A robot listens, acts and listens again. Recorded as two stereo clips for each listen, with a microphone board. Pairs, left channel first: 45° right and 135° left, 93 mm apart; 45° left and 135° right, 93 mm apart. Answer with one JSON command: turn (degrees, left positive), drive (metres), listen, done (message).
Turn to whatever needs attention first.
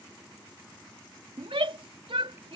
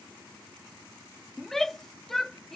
{"turn": 130}
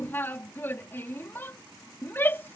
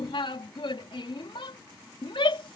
{"turn": 20}
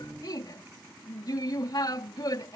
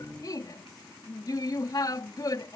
{"done": "Facing the shout."}